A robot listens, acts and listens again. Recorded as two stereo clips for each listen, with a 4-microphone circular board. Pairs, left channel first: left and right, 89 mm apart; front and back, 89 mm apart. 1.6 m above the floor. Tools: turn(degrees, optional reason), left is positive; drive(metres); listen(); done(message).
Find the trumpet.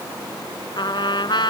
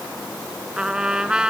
turn(degrees=100, reason="The trumpet: 100° left.")
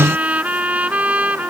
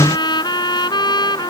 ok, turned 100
turn(degrees=-20, reason="The trumpet is now 20° right.")
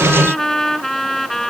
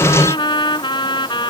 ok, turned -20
done("Found it: a trumpet, straight ahead.")